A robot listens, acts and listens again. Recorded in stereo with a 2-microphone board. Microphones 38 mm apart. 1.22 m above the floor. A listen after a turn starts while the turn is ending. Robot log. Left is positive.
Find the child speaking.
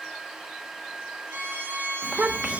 note: The child speaking: about 30° right or 150° right.
cmd yaw -30
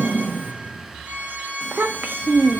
note: So it is at 120° right.
cmd yaw -120
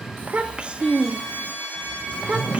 note: The child speaking is now 30° right.
cmd yaw -30
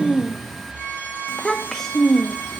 end: Facing the child speaking.